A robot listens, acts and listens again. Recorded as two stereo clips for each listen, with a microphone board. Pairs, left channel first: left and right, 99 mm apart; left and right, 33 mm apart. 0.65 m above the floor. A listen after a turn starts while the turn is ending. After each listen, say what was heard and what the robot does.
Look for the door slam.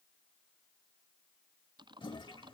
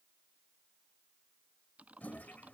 Keep listening.
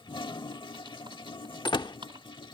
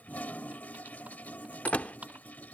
The door slam: about 50° left or 130° left. Turn 50° left.
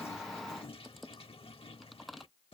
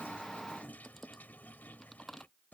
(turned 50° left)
Keep listening.
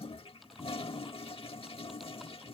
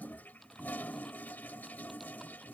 I heard a door slam, but can't make it out now. It was about straight ahead or 80° left.